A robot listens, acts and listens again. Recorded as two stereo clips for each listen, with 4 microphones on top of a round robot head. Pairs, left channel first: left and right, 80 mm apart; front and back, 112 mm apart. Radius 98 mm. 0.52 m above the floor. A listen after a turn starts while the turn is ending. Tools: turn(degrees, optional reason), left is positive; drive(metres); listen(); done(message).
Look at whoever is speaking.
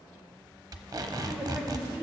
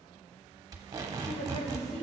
turn(degrees=-10, reason="The woman speaking: 10° right.")
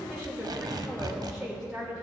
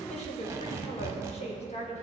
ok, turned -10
done("Facing the woman speaking.")